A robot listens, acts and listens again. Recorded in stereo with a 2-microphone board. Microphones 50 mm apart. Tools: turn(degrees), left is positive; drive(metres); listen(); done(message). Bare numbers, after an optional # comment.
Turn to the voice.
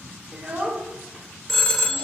# The child speaking: about 25° right or 155° right.
turn(-25)
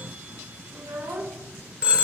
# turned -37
# So it is at 115° right.
turn(-115)
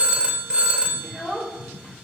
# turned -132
# The child speaking is now 15° left.
turn(15)
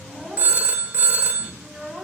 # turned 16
done("Found it: a child speaking, straight ahead, 1 to 2 m away.")